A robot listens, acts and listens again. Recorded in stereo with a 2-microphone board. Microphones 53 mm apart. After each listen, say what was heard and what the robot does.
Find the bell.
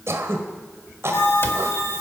The bell: about 60° left or 120° left. Turn 60° left.
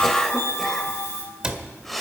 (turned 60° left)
So it is at 60° left. Turn 60° left.
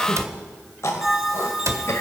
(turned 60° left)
The bell is now 10° right. Turn 10° right.
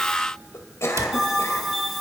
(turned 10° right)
Facing the bell, over 4 m away.